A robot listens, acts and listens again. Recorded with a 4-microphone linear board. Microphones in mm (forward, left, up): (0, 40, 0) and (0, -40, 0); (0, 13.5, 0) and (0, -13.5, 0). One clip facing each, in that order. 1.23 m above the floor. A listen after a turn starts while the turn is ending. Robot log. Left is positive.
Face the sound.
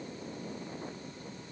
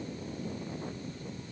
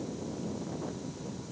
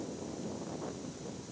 cmd idle
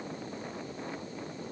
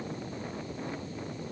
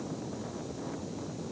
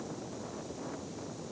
cmd idle
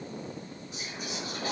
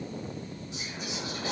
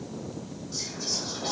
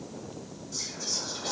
note: The whispering: about 40° left or 140° left.
cmd yaw +40
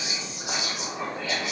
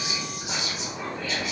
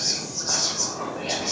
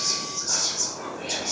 note: So it is at 100° left.
cmd yaw +100
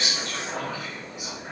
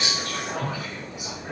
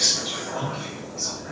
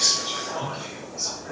note: The whispering is now 15° right.
cmd yaw -15
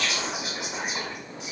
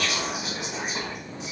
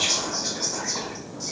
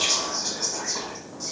end: Facing the whispering, 1 to 2 m away.